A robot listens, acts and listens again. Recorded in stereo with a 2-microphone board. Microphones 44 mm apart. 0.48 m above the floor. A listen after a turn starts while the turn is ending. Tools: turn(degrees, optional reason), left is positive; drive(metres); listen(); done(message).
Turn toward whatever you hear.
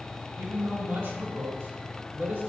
turn(degrees=-70, reason="The man speaking: about 70° right or 110° right.")
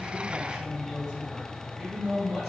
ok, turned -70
turn(degrees=-10, reason="So it is at 10° right.")
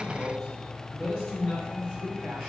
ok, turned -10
done("Facing the man speaking.")